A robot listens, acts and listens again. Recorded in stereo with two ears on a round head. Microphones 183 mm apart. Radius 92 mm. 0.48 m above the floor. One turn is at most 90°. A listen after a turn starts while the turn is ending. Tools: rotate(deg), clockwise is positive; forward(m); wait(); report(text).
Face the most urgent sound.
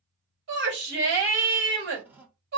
rotate(60)
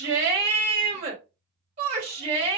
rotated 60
rotate(40)
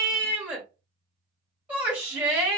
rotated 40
rotate(10)
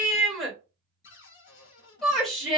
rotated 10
report("Facing the shout, 1 to 2 m away.")